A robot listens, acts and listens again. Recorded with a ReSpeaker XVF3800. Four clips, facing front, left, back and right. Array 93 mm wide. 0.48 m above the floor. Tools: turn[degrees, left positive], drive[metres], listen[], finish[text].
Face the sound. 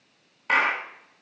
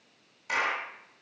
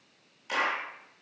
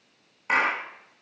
Thought: The clap: 30° right.
Action: turn[-30]
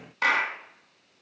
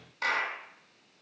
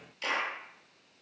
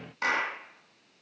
Action: finish[Found it: a clap, straight ahead.]